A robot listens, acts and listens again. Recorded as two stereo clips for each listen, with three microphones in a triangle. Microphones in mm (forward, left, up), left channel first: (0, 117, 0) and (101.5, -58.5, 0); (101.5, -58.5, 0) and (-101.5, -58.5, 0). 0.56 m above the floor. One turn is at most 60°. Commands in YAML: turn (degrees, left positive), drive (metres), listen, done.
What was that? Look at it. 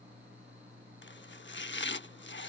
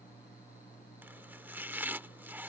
turn: 60
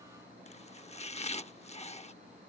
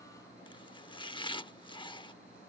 turn: 60
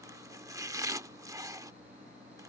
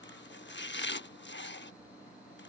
turn: 15
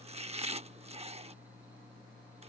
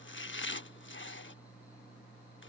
done: "Found it: chopping, straight ahead."